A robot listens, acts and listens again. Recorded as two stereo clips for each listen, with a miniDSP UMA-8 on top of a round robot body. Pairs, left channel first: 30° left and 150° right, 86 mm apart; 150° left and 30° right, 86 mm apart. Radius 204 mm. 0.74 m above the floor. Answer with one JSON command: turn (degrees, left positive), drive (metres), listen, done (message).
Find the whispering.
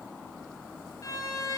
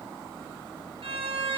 {"listen": true}
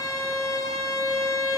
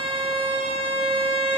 {"listen": true}
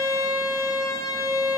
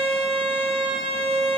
{"done": "I can't make out whispering, only a violin."}